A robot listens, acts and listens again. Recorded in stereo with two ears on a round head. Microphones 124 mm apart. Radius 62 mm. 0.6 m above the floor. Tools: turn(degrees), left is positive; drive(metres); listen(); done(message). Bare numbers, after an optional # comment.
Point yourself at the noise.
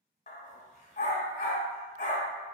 # The dog barking: about 60° left or 120° left.
turn(60)
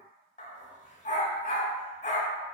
# So it is at 55° left.
turn(55)
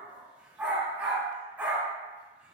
# The dog barking is now 10° right.
turn(-10)
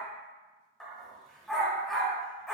done("Facing the dog barking, under 1 m away.")